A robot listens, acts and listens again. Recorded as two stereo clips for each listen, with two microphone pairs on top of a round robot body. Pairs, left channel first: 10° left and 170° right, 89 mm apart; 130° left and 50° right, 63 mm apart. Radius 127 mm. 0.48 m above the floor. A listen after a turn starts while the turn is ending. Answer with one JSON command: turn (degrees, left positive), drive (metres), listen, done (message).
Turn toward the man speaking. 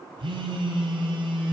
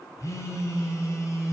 {"listen": true}
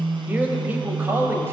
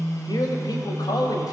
{"turn": 130}
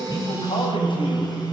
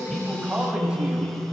{"listen": true}
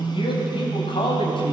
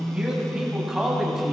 {"turn": 30}
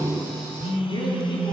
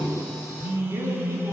{"listen": true}
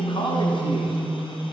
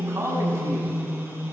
{"turn": -10}
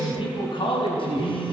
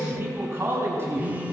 {"done": "Found it: a man speaking, straight ahead."}